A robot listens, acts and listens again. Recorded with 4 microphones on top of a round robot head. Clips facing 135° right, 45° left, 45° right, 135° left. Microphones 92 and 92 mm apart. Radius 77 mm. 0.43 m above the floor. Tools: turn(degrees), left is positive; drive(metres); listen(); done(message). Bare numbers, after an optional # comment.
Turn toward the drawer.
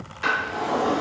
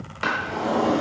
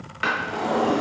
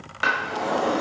# The drawer: 65° left.
turn(65)
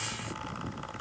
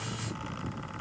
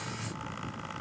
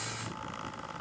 listen()
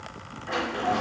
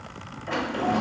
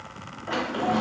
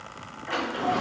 # The drawer is now 10° left.
turn(10)
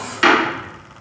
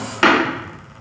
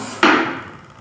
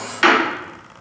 done("Found it: a drawer, straight ahead.")